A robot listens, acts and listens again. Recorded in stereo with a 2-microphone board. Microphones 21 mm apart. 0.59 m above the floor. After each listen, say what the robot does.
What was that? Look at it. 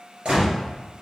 Turn 55° right.
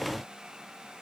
Keep listening.
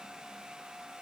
I heard a gunshot, but can't make it out now. It was about straight ahead or 70° right.